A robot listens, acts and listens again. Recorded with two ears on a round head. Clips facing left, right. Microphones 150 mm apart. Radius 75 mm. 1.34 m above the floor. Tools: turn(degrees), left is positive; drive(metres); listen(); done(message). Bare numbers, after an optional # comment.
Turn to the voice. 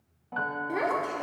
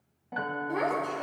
turn(30)
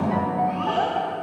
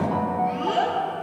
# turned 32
# So it is at 20° right.
turn(-20)
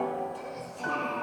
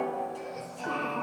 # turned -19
done("Found it: a child speaking, straight ahead.")